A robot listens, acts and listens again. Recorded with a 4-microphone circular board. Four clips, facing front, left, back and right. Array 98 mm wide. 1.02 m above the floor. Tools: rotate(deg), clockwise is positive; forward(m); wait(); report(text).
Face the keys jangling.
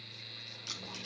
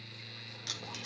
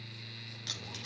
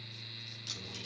rotate(-125)
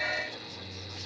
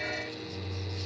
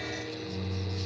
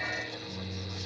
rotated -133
wait()
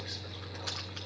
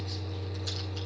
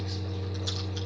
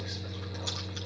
wait()
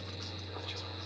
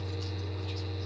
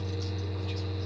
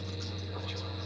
report("I heard keys jangling from this way, but can't make it out now.")